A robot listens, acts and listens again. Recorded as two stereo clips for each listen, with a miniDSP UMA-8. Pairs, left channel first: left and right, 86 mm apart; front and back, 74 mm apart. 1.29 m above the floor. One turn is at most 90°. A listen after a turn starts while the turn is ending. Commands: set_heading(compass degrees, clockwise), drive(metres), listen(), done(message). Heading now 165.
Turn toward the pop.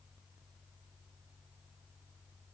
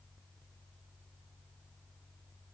listen()
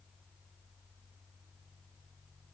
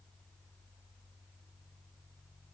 listen()
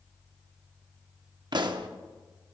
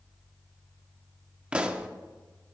set_heading(255)
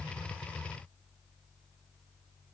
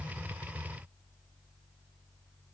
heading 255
set_heading(270)
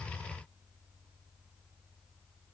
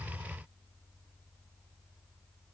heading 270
done("I heard a pop from this way, but can't make it out now.")